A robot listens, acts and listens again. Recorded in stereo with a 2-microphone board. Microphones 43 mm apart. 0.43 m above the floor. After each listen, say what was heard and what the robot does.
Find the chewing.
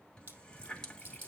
The chewing: about 50° right or 130° right. Turn 50° right.
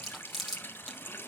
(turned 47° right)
Facing the chewing, over 4 m away.